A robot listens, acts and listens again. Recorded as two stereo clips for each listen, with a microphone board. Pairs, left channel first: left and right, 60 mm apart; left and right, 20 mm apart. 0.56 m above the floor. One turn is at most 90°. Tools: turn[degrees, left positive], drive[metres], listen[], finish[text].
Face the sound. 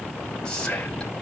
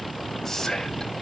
Thought: The whispering: about 15° left or 165° left.
Action: turn[15]
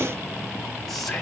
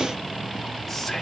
Action: finish[Facing the whispering, 2 to 4 m away.]